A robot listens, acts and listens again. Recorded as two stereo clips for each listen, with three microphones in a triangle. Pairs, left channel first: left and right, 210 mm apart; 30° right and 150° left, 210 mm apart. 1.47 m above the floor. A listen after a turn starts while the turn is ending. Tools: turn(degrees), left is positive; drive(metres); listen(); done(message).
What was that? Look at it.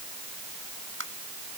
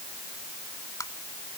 turn(degrees=-105)
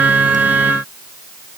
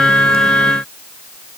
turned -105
listen()
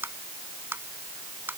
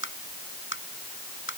turn(degrees=-10)
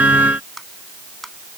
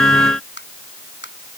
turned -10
done("Facing the tapping.")